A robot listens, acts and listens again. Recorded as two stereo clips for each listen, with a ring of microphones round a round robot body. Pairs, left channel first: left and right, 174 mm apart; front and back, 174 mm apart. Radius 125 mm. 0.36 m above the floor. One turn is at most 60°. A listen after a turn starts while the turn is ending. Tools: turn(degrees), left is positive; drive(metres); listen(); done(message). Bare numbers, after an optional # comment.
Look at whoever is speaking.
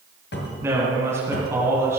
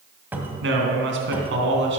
# The man speaking: 170° right.
turn(-60)
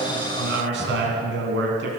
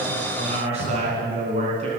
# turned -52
# The man speaking is now 115° right.
turn(-60)
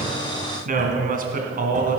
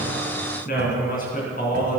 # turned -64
# The man speaking is now 55° right.
turn(-55)
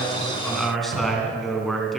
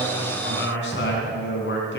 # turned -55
done("Facing the man speaking, 2 to 4 m away.")